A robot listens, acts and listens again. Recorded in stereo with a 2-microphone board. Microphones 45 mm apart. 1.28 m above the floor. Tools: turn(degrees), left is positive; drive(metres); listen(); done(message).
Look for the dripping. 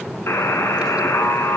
listen()
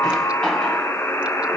listen()
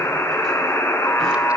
done("I can't make out dripping, only a buzzer.")